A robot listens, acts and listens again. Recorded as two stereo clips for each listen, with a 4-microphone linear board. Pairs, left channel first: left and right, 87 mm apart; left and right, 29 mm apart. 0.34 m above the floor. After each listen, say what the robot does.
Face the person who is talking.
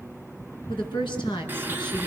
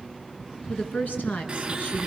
Turn 70° left.
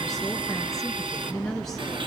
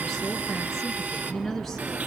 Found it: a woman speaking, straight ahead, over 4 m away.